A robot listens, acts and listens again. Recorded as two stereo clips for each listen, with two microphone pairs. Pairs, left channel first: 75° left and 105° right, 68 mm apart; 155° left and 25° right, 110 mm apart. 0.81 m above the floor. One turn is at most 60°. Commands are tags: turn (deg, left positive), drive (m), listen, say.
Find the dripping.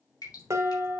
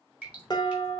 <turn deg="55"/>
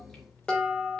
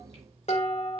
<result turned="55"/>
<listen/>
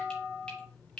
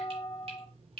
<say>Facing the dripping.</say>